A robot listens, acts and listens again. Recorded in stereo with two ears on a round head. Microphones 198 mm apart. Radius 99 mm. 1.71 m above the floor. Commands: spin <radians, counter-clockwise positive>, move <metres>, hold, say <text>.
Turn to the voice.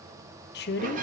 spin 0.87
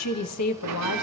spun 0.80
spin 1.40
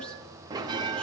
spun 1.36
hold
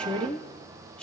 say Found it: a woman speaking, straight ahead, 1 to 2 m away.